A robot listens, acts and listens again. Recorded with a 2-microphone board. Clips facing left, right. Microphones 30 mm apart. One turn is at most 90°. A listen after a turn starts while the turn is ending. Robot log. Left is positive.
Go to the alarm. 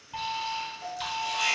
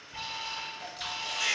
note: The alarm: about 55° left or 125° left.
cmd yaw +55
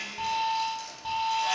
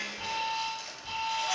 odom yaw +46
note: So it is at 70° left.
cmd yaw +70
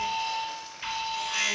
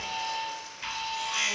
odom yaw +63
note: The alarm is now 10° left.
cmd yaw +10
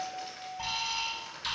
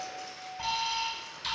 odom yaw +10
cmd fwd 1.0
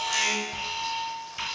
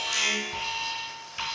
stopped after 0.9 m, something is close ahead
end: I am next to the alarm.